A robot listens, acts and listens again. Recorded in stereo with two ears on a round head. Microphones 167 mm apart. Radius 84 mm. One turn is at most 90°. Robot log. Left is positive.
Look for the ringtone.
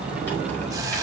cmd idle
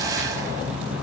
cmd idle
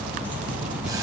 end: I can't make out a ringtone to turn to.